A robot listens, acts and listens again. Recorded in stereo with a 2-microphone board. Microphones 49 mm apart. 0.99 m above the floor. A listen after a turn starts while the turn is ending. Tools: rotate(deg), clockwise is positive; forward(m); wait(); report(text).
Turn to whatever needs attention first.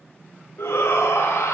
rotate(-70)
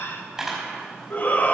rotate(-35)
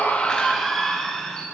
rotate(-10)
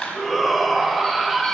report("Facing the shout, 1 to 2 m away.")